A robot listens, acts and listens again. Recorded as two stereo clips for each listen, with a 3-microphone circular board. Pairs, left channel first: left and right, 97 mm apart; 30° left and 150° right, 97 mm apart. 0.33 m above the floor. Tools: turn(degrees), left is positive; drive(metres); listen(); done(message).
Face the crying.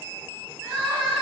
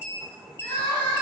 turn(degrees=-20)
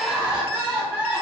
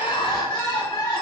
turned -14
turn(degrees=-10)
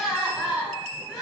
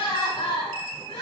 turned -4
done("Found it: crying, straight ahead.")